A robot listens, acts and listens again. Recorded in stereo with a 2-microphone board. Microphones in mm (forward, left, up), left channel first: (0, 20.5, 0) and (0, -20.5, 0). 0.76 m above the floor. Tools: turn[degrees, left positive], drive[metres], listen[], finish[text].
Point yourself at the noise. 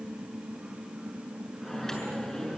Action: turn[30]
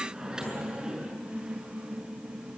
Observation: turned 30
Thought: So it is at 15° right.
Action: turn[-15]
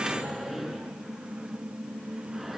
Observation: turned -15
Action: finish[Facing the microwave, over 4 m away.]